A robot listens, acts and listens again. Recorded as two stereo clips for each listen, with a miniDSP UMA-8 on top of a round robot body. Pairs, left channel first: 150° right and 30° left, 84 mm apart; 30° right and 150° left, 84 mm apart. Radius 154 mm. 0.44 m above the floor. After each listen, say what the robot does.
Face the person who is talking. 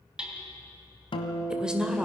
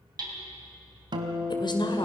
Turn 50° right.
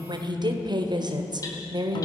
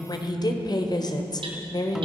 Facing the woman speaking, 2 to 4 m away.